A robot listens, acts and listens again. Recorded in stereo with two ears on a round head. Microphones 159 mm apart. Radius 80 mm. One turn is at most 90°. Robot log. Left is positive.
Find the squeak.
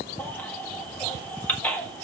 cmd idle
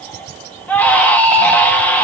cmd idle
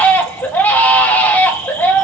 end: I can't make out a squeak, only a baby crying.